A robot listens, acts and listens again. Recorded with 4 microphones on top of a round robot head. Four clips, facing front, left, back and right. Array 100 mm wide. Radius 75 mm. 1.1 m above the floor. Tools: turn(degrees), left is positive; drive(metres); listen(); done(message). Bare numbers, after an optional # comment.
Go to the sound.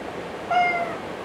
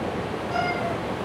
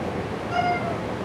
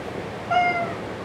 # The cat meowing: 35° right.
turn(-35)
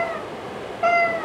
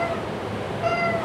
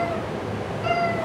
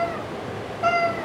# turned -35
# The cat meowing is now 10° right.
turn(-10)
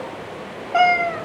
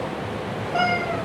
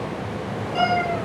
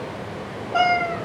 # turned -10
drive(1.0)
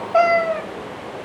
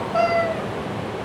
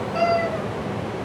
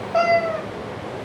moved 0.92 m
# The cat meowing is now 10° right.
turn(-10)
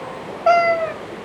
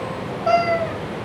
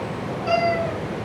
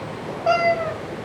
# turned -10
drive(1.0)
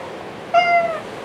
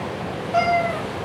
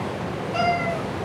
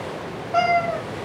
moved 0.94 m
drive(1.0)
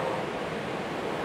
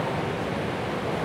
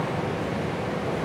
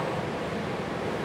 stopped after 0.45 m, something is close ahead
listen()
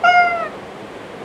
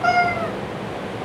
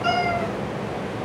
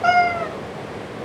done("Arrived at the cat meowing, straight ahead.")